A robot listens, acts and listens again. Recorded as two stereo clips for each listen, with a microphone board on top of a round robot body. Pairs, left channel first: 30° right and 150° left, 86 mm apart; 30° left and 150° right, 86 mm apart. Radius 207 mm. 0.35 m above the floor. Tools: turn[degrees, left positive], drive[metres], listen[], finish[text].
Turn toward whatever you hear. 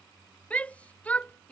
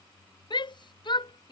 Thought: The shout: 45° left.
Action: turn[45]
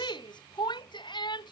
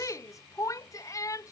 Thought: The shout is now 15° right.
Action: turn[-15]
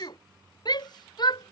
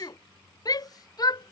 Action: finish[Found it: a shout, straight ahead.]